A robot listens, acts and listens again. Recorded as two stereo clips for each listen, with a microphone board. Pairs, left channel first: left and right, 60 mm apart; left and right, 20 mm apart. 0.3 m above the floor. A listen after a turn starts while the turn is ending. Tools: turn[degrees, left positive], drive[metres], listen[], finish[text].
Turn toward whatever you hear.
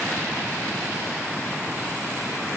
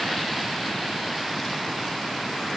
Action: listen[]
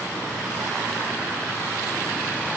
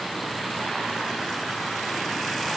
Action: listen[]
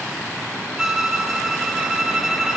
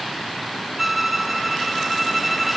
Action: turn[-30]
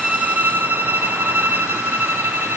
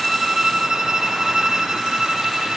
Thought: So it is at 145° right.
Action: turn[-145]
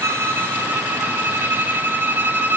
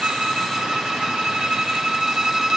Thought: The violin is now 40° right.
Action: turn[-40]
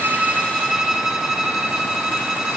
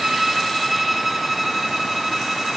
Thought: The violin is now 10° right.
Action: turn[-10]
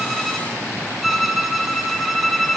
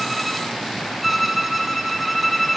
Action: finish[Facing the violin, 1 to 2 m away.]